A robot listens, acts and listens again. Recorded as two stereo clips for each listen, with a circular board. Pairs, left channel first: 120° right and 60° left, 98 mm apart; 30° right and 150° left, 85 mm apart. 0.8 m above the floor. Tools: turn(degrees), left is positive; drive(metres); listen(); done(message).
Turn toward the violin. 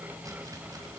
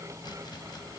listen()
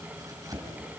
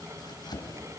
listen()
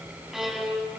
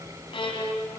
turn(degrees=-25)
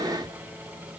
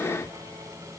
listen()
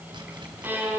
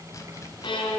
turn(degrees=-10)
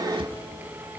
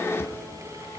listen()
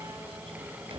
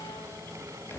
listen()
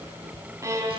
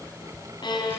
done("Found it: a violin, straight ahead.")